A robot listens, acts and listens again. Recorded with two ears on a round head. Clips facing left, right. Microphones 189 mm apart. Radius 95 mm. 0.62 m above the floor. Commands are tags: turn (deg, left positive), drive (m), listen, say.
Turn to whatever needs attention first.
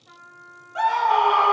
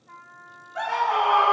<turn deg="50"/>
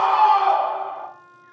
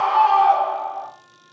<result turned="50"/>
<turn deg="70"/>
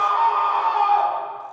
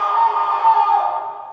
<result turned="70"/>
<say>Found it: a scream, straight ahead.</say>